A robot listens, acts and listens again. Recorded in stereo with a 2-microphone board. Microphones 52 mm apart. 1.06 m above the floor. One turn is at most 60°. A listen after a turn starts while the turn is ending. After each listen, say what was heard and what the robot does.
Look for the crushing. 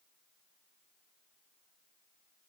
Keep listening.
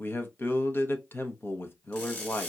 The crushing: about 20° left or 160° left. Turn 20° left.
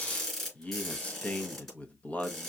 Found it: crushing, straight ahead.